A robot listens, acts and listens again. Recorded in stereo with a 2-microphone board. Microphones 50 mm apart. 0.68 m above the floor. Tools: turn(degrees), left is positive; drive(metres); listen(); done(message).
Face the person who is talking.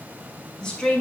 turn(degrees=30)
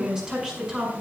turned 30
turn(degrees=-15)
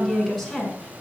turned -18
done("Facing the woman speaking, over 4 m away.")